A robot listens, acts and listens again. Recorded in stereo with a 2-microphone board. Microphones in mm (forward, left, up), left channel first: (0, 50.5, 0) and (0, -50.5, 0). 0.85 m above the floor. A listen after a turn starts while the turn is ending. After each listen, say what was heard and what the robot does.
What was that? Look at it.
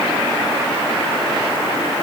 Keep listening.
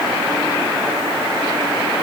Keep listening.
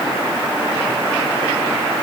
I can't make out anything to turn to.